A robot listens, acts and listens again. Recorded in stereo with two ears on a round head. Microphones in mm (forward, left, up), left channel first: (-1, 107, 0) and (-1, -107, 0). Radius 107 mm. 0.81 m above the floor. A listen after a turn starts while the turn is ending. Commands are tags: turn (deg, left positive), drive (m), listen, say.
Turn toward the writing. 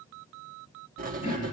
<turn deg="-40"/>
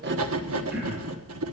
<turn deg="-100"/>
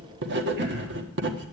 <turn deg="-55"/>
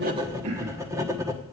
<turn deg="-15"/>
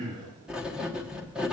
<say>Found it: writing, straight ahead.</say>